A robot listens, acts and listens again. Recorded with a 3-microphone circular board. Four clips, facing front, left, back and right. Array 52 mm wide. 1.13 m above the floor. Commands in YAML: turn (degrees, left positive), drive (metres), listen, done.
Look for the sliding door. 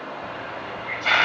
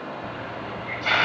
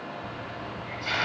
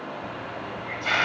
listen: true
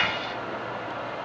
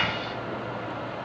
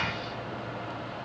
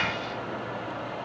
listen: true
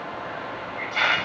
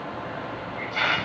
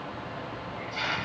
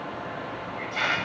done: "I can't make out a sliding door, only a hiss."